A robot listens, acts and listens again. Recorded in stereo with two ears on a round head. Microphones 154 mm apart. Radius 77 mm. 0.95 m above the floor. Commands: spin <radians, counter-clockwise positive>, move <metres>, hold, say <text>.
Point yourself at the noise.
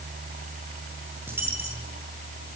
spin -0.52
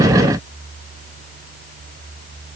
hold
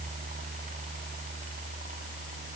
say I heard a dropped coin, but can't make it out now. It was about 15° left or 135° right.